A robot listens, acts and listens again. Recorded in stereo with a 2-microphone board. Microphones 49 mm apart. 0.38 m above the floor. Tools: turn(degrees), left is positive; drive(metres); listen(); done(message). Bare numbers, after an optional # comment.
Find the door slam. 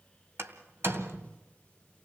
# The door slam: about 60° right or 120° right.
turn(-60)
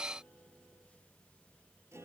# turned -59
listen()
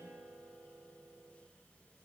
done("I heard a door slam, but can't make it out now. It was about straight ahead or 65° right.")